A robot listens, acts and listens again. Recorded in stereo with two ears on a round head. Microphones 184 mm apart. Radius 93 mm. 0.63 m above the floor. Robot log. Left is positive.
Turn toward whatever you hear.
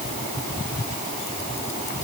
cmd idle
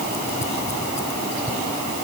cmd idle
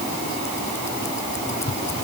end: I can't make out anything to turn to.